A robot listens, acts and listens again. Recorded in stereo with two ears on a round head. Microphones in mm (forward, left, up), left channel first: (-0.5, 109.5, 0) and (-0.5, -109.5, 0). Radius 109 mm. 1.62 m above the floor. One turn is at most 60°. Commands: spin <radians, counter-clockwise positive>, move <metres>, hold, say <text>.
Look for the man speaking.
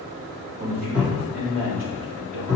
spin -1.05
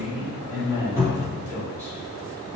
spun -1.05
spin -0.35
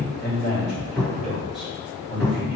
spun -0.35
say Found it: a man speaking, straight ahead, over 4 m away.